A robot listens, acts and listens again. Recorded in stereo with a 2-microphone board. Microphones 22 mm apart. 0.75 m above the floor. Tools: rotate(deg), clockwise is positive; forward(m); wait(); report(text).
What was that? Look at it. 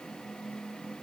wait()
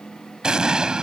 rotate(45)
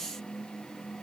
wait()
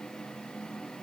report("I heard an explosion, but can't make it out now. It was about straight ahead or 90° right.")